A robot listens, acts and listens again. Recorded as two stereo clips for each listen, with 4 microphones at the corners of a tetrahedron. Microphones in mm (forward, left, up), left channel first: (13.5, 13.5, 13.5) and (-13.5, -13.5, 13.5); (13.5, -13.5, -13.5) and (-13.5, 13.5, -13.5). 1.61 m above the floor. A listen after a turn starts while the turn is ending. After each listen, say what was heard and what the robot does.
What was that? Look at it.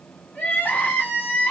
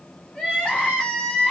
The crying: 15° left. Turn 15° left.
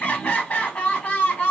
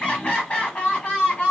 Found it: crying, straight ahead.